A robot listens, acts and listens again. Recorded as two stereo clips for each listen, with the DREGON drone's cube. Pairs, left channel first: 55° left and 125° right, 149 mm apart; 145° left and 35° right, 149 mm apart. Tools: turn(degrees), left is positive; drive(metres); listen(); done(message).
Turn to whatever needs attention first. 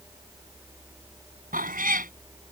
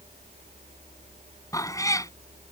listen()
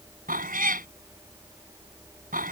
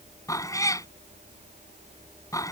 listen()
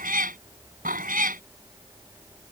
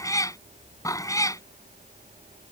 done("I can't make out anything urgent, only a cat meowing.")